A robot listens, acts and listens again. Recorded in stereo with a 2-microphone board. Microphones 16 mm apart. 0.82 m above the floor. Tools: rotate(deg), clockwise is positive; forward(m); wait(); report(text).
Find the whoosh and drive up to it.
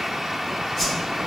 rotate(-30)
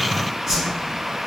rotate(20)
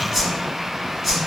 forward(1.0)
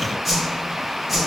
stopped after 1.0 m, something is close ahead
report("I am next to the whoosh.")